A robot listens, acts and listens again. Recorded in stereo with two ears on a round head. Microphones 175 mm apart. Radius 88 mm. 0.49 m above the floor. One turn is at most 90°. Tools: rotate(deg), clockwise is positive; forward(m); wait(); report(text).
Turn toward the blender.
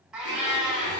rotate(-60)
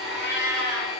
report("Found it: a blender, straight ahead, 1 to 2 m away.")